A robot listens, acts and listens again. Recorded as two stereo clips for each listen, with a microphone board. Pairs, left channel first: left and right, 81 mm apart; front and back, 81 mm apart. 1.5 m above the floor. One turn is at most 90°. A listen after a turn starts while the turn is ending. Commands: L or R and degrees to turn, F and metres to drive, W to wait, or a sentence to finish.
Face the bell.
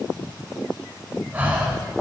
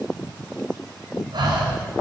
W
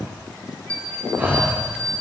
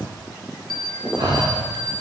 L90
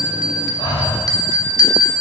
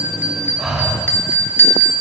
L60
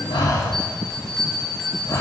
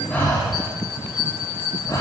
Facing the bell, 1 to 2 m away.